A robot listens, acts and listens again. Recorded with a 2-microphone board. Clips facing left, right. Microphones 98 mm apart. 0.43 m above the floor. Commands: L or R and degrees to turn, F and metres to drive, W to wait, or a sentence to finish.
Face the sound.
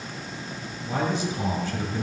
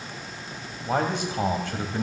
R65
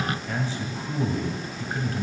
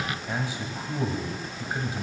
R15
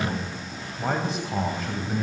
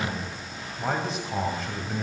Facing the man speaking, 1 to 2 m away.